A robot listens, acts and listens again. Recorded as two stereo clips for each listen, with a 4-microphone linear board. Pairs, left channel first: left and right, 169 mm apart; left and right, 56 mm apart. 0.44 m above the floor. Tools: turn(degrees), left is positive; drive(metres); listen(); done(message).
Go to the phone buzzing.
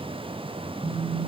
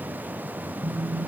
turn(degrees=-45)
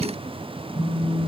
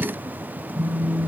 drive(metres=1.0)
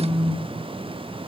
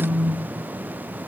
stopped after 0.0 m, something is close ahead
done("Something is in my way. I am facing the phone buzzing but have not reached it.")